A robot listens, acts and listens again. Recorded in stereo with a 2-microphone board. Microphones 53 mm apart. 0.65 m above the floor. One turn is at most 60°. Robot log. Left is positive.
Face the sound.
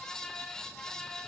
cmd idle
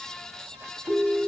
note: The ringtone: about 55° right or 125° right.
cmd yaw -55
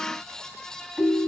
end: Facing the ringtone, 2 to 4 m away.